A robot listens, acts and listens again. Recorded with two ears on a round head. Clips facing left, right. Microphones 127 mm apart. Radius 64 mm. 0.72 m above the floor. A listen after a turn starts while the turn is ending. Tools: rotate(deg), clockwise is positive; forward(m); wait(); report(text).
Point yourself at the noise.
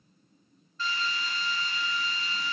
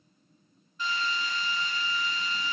rotate(15)
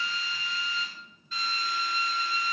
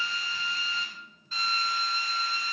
rotate(150)
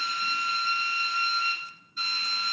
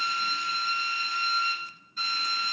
rotate(45)
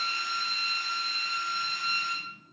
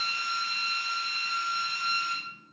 rotate(10)
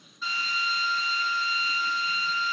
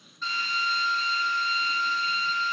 report("Facing the drill.")